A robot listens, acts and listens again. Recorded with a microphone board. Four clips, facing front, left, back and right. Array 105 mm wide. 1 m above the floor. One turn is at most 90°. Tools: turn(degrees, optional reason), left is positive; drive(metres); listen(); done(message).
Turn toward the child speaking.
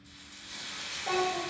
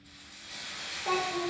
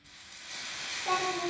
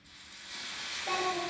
turn(degrees=90, reason="The child speaking: 105° left.")
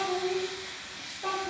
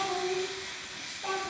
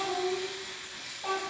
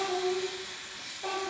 turn(degrees=-20, reason="The child speaking is now 20° right.")
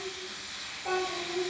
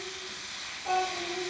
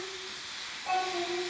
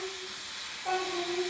turn(degrees=-10, reason="The child speaking is now 10° right.")
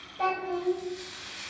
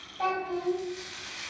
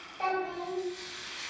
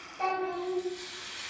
done("Found it: a child speaking, straight ahead.")